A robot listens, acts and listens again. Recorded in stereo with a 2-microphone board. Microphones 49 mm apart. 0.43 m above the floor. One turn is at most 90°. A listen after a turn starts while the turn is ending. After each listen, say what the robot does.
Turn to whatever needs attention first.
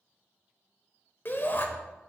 Turn 45° left.
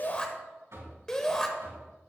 Turn 15° left.
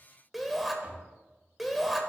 Found it: a shout, straight ahead, 1 to 2 m away.